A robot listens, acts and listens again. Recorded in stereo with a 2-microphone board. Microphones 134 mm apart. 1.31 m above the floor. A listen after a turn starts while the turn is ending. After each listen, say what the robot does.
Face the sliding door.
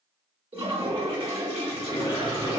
Turn 30° left.
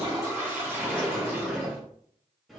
Facing the sliding door.